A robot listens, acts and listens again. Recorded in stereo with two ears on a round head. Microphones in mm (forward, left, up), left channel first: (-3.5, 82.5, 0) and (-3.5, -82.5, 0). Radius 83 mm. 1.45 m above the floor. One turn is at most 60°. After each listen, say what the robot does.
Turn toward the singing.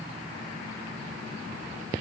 Keep listening.
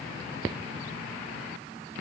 Keep listening.
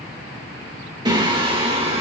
Turn 25° right.
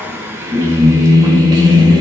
Turn 25° right.
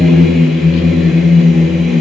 Facing the singing.